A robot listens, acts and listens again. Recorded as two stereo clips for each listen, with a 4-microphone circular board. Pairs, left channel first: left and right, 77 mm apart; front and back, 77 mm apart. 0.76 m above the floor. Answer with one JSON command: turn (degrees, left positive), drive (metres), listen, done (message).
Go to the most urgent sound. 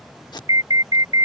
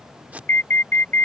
{"turn": -60}
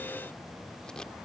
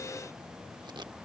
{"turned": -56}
{"listen": true}
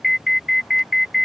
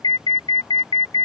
{"drive": 1.0}
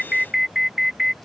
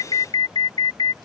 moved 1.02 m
{"drive": 1.0}
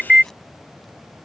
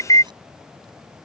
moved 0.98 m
{"turn": -10}
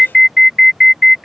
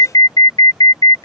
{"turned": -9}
{"drive": 1.0}
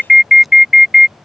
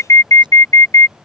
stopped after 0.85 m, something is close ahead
{"done": "I am next to the alarm."}